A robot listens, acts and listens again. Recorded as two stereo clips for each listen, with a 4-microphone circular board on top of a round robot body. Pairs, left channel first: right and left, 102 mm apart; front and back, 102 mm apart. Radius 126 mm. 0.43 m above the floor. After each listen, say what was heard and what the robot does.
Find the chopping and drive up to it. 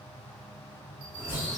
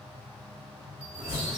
The chopping: 165° left. Turn 165° left.
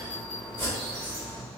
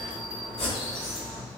The chopping is now 20° right. Turn 20° right.
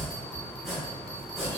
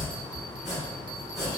Drive 1.0 m forward.
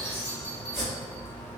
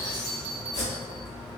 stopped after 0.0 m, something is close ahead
Something is in my way. I am facing the chopping but have not reached it.